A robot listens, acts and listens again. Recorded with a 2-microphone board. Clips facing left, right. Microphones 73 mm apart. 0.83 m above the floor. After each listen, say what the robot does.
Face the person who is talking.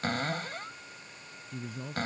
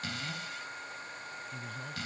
Turn 30° left.
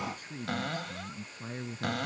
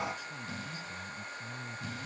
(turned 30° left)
Turn 130° left.
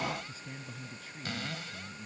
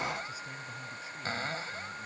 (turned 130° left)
Keep listening.
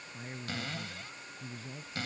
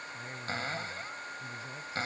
Turn 15° right.
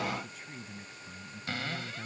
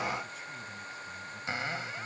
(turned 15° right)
Keep listening.
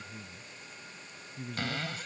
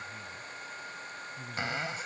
Found it: a man speaking, straight ahead.